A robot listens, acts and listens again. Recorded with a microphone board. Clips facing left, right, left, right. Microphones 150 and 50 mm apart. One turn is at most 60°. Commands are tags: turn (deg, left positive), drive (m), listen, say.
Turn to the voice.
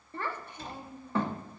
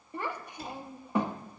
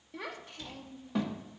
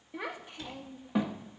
<turn deg="-30"/>
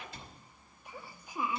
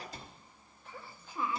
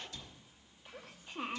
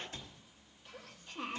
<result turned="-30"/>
<turn deg="15"/>
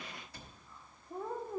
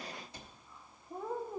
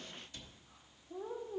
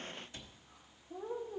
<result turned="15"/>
<say>Found it: a child speaking, straight ahead, under 1 m away.</say>